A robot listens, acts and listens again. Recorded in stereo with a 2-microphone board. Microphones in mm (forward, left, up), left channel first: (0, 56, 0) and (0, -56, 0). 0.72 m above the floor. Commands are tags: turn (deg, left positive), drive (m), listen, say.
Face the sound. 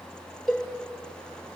<turn deg="30"/>
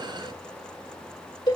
<turn deg="140"/>
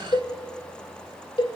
<turn deg="45"/>
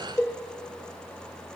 <turn deg="20"/>
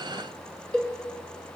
<say>Found it: a cowbell, straight ahead.</say>